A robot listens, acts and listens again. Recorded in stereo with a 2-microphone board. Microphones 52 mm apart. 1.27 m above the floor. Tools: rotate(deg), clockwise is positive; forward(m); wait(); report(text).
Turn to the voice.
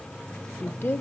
rotate(-45)
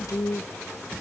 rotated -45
rotate(-90)
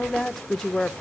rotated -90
report("Facing the woman speaking, under 1 m away.")